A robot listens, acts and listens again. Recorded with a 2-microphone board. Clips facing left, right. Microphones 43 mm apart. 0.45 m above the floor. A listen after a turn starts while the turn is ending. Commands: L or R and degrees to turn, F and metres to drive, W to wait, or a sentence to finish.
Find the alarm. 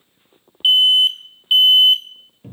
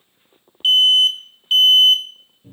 L20
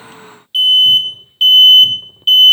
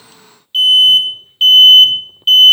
Found it: an alarm, straight ahead.